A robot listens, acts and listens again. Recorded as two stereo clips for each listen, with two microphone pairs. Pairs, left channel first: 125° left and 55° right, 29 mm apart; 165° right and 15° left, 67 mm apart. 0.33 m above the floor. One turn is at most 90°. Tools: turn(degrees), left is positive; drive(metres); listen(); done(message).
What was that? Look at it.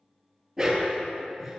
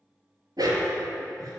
turn(degrees=25)
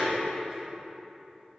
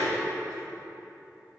listen()
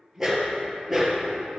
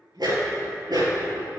turn(degrees=30)
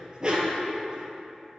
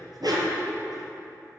turn(degrees=10)
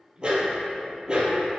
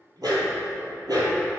done("Facing the dog barking.")